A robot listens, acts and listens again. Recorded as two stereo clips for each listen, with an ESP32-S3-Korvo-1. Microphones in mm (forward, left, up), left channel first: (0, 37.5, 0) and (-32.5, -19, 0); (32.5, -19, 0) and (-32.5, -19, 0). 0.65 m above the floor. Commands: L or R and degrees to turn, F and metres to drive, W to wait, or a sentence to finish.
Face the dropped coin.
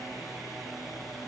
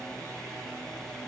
W
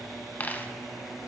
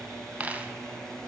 L120
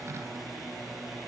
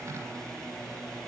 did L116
Facing where the dropped coin came from. I can't hear it now.